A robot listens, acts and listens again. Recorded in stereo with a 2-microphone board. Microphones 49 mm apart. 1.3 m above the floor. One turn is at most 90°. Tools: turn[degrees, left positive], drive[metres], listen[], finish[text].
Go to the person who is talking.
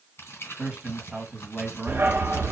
Thought: The man speaking: about 25° right or 155° right.
Action: turn[-25]
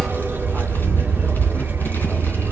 Action: listen[]
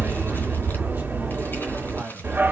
Action: listen[]
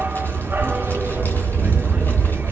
Action: finish[I heard a man speaking, but can't make it out now. It was about straight ahead or 130° right. I did not reach it.]